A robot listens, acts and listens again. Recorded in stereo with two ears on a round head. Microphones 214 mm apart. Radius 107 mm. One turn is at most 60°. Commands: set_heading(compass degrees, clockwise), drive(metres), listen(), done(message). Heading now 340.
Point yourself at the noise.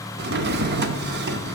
set_heading(25)
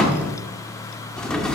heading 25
done("Facing the drawer.")